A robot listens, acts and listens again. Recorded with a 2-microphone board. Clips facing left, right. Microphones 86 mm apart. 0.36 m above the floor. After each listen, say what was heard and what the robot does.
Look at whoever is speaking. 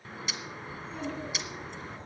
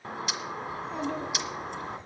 The child speaking: about 65° right or 115° right. Turn 65° right.
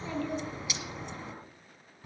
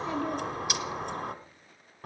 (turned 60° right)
So it is at 15° right. Turn 15° right.
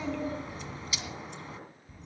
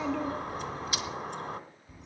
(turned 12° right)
Found it: a child speaking, straight ahead.